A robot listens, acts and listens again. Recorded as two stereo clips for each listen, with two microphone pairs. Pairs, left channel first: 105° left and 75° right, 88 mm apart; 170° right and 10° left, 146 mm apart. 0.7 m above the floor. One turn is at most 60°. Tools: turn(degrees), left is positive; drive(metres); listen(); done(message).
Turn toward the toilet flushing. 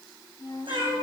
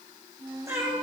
listen()
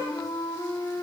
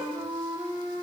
listen()
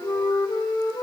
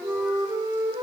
done("I can't make out a toilet flushing, only a flute and a cat meowing.")